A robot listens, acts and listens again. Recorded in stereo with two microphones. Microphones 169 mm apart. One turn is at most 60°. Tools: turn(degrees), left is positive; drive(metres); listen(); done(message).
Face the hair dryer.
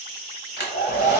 turn(degrees=60)
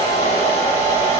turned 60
turn(degrees=35)
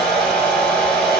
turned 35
done("Found it: a hair dryer, straight ahead.")